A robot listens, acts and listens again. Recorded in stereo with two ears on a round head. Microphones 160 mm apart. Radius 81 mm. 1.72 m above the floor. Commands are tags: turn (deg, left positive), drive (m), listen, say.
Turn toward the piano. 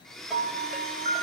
<turn deg="-40"/>
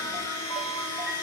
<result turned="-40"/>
<listen/>
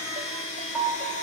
<say>Facing the piano, over 4 m away.</say>